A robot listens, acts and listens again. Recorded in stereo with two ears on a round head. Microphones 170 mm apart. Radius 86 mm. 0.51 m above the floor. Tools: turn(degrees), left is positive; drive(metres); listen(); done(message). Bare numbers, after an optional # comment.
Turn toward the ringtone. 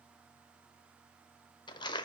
listen()
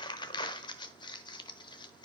listen()
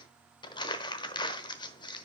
done("I can't make out a ringtone, only crumpling.")